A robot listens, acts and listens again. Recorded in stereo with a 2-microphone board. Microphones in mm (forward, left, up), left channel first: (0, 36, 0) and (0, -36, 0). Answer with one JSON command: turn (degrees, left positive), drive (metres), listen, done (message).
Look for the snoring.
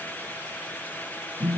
{"listen": true}
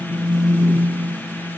{"listen": true}
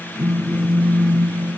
{"done": "I can't make out snoring, only a phone buzzing."}